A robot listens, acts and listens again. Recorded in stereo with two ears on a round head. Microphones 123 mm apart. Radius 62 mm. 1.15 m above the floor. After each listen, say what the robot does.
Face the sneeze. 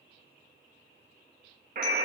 Keep listening.
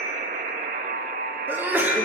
Turn 15° right.
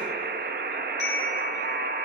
Keep listening.
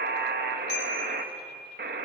I heard a sneeze, but can't make it out now. It was about straight ahead or 150° right.